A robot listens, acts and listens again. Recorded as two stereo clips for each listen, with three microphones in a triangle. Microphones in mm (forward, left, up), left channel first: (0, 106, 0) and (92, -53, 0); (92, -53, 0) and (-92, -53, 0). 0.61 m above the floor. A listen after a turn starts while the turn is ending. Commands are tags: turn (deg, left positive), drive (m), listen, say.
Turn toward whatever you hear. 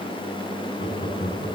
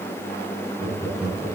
<turn deg="105"/>
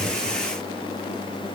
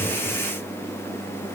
<listen/>
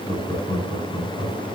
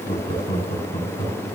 <turn deg="20"/>
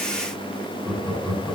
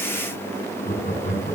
<turn deg="10"/>
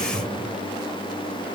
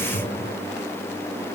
<say>Facing the laughter.</say>